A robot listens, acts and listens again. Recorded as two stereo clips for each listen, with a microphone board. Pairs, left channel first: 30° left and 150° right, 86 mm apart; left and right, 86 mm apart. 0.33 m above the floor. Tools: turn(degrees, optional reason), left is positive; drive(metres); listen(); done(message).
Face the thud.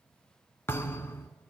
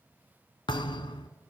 turn(degrees=90, reason="The thud: 90° left.")
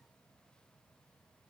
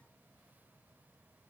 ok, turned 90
done("Facing where the thud came from. I can't hear it now.")